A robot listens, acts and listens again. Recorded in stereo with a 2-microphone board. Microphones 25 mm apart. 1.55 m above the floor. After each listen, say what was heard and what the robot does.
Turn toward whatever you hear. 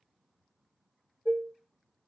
The dishes clattering: about 60° right or 120° right. Turn 60° right.
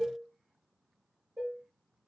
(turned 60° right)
So it is at 30° right. Turn 30° right.
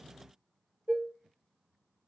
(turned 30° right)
The dishes clattering is now 20° right. Turn 20° right.
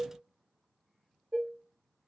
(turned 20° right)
Facing the dishes clattering.